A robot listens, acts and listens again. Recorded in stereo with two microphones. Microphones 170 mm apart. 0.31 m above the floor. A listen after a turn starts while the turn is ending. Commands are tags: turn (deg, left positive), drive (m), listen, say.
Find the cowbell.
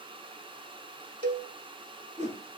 <turn deg="-70"/>
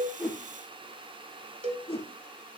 <turn deg="-35"/>
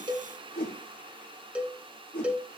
<say>Facing the cowbell, under 1 m away.</say>